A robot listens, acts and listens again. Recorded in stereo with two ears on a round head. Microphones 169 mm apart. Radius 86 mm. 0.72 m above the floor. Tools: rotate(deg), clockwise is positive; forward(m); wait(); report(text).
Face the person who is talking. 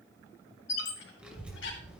rotate(30)
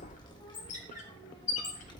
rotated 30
rotate(-25)
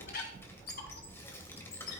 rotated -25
rotate(-10)
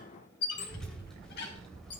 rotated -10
report("Found it: a child speaking, straight ahead.")